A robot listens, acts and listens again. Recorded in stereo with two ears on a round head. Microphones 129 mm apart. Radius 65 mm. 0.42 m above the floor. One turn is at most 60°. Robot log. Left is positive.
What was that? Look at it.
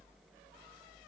cmd idle
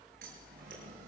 note: The scissors: about 60° right or 120° right.
cmd yaw -60
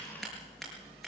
end: Facing the scissors, over 4 m away.